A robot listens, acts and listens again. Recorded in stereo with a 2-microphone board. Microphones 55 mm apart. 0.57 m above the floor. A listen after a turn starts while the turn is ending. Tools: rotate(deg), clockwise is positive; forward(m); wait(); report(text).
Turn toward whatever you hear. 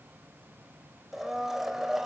rotate(30)
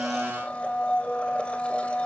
rotate(-25)
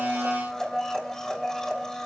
rotate(-10)
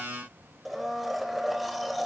report("Facing the blender, 2 to 4 m away.")